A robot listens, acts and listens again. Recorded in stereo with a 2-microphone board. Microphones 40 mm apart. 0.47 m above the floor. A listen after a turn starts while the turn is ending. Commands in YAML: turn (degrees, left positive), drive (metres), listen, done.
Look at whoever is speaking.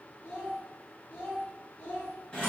turn: 50
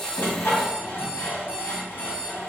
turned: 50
listen: true
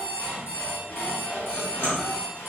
listen: true
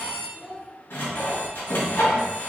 turn: -45
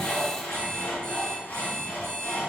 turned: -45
listen: true
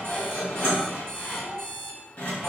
turn: -25
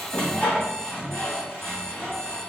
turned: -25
listen: true
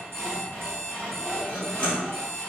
listen: true
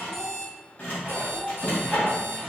done: "Facing the child speaking, 1 to 2 m away."